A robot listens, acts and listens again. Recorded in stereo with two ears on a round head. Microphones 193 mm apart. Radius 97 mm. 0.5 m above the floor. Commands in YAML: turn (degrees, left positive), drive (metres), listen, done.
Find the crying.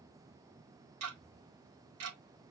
listen: true
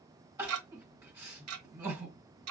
turn: -30
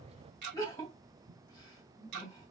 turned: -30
turn: 15
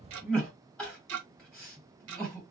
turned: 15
done: "Facing the crying."